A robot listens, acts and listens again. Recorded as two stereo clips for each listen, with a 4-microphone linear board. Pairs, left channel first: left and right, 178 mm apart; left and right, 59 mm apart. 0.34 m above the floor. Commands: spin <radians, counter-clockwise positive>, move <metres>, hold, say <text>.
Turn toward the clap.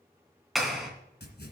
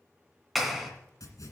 spin 0.52
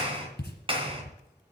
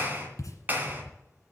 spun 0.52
spin -0.52
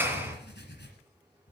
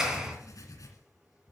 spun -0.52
spin -0.17
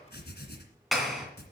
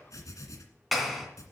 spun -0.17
say Facing the clap.